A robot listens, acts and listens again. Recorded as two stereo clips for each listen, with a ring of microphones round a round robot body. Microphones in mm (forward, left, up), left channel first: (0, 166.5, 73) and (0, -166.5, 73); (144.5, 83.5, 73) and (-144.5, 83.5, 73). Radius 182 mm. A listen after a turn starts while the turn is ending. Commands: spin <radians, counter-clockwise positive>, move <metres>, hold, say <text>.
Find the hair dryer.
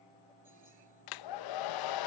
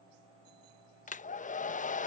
spin 1.13
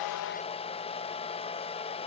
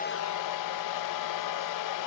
spin 0.26
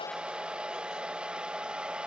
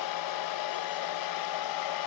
say Found it: a hair dryer, straight ahead.